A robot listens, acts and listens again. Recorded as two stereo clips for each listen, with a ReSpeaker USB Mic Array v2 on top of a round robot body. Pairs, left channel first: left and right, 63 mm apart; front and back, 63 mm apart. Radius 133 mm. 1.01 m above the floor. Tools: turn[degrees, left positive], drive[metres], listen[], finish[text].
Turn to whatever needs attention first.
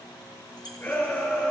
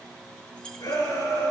Thought: The shout: 25° left.
Action: turn[25]
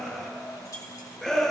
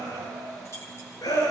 Action: finish[Facing the shout.]